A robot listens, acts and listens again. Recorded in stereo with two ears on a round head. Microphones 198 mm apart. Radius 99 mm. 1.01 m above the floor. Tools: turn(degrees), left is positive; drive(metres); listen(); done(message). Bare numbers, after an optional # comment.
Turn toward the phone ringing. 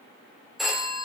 turn(30)
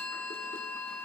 listen()
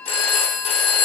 # So it is at 150° left.
turn(150)
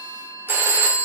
# The phone ringing is now 10° right.
turn(-10)
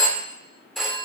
done("Facing the phone ringing, 2 to 4 m away.")